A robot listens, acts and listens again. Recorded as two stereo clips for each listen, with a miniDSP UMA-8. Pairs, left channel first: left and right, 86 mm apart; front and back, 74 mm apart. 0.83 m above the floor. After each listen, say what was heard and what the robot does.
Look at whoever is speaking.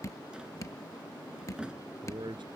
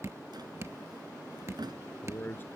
The man speaking: 65° right. Turn 65° right.
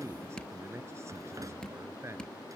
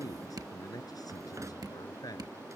The man speaking is now 30° right. Turn 30° right.
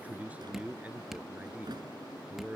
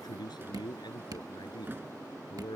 The man speaking is now 15° right. Turn 15° right.
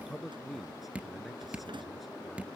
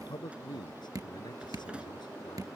Facing the man speaking.